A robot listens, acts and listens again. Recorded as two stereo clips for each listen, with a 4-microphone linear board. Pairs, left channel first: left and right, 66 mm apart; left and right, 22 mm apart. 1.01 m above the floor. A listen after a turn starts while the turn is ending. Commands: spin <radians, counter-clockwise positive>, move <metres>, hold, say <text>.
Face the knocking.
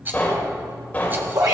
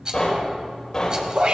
spin 0.44
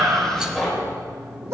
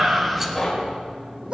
say Found it: knocking, straight ahead, over 4 m away.